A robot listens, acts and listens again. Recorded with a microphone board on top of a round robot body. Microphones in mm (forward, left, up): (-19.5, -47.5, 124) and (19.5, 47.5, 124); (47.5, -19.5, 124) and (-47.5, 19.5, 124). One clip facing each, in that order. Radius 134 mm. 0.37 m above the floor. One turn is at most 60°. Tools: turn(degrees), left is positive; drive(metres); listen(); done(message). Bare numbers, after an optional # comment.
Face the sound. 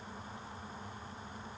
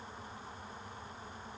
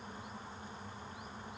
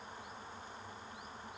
listen()
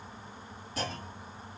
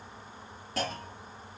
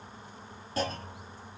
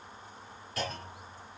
# The clunk: 40° left.
turn(40)
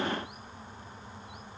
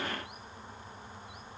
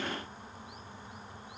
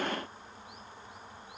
done("I heard a clunk from this way, but can't make it out now.")